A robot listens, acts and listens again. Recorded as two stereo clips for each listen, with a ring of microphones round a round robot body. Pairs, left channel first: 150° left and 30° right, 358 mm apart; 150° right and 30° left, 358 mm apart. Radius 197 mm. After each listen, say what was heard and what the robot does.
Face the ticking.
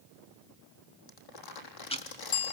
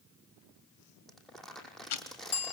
The ticking: 135° right. Turn 135° right.
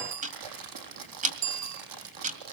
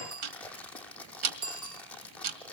The ticking is now 40° left. Turn 40° left.
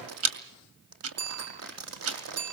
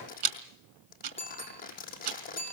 The ticking is now 20° left. Turn 20° left.
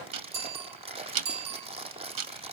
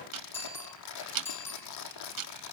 Facing the ticking.